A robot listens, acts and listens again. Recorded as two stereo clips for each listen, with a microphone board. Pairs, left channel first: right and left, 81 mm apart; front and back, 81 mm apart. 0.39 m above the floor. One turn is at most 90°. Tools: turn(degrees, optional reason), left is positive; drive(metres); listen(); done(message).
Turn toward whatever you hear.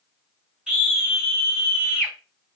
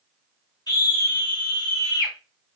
turn(degrees=10, reason="The scream: 10° left.")
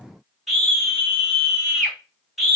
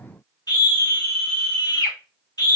done("Found it: a scream, straight ahead.")